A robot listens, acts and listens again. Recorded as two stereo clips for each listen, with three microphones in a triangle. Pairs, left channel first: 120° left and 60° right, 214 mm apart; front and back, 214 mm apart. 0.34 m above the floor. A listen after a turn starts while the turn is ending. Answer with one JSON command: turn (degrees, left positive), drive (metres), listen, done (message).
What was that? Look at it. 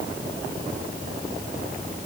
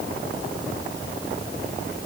{"listen": true}
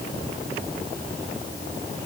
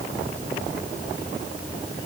{"listen": true}
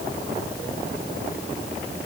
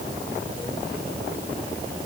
{"done": "I can't make out anything to turn to."}